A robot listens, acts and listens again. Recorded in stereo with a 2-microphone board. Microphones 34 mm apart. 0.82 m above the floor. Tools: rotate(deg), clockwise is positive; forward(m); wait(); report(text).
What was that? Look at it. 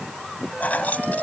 rotate(-50)
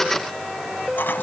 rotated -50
rotate(-80)
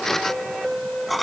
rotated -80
report("Found it: keys jangling, straight ahead.")